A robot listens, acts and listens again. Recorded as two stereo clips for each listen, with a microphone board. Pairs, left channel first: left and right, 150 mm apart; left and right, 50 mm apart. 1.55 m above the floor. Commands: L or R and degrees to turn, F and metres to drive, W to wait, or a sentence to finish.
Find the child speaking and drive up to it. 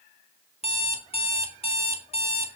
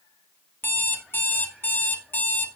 W
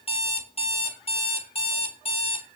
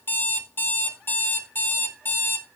W
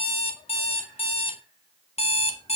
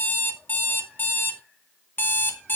I can't make out a child speaking, only an alarm clock.